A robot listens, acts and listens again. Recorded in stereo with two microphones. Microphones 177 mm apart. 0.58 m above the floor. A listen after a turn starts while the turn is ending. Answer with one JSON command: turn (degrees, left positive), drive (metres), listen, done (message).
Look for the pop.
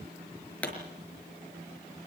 {"turn": 30}
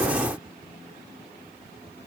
{"listen": true}
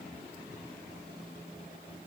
{"done": "I heard a pop, but can't make it out now. It was about 25° right or 145° left."}